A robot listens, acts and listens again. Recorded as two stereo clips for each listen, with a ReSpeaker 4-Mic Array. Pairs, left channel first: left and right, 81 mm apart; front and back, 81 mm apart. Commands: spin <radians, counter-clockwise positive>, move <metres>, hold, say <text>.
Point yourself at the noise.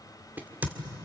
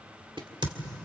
spin -2.79
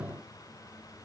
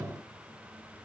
say Facing where the crack came from. I can't hear it now.